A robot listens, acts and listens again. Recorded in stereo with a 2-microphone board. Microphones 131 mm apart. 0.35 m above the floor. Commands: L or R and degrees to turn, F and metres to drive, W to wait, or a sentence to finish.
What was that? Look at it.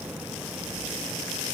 W
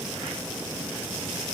W
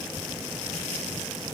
I can't make out anything to turn to.